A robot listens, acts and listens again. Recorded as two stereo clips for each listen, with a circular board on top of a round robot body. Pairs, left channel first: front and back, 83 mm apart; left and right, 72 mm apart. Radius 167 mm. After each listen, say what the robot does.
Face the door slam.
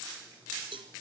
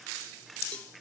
Keep listening.
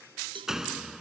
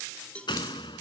Turn 95° left.
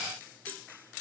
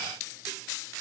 I heard a door slam from this way, but can't make it out now.